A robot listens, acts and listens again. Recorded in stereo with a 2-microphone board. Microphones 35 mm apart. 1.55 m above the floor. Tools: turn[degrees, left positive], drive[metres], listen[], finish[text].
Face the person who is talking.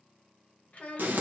Thought: The child speaking: about 40° left or 140° left.
Action: turn[40]
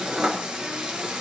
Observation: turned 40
Action: listen[]
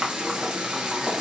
Action: listen[]
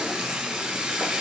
Action: finish[I heard a child speaking, but can't make it out now. It was about straight ahead or 100° left.]